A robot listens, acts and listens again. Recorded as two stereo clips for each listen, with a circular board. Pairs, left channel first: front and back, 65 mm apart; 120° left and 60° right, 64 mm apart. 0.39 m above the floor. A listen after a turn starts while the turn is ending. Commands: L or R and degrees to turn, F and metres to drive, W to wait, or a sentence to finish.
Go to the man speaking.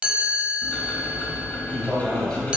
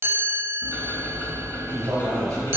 R75
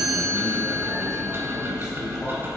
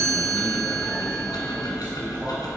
W
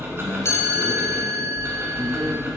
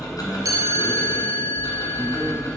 W
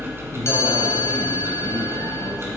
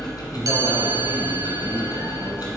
Facing where the man speaking came from. I can't hear it now. I did not reach it.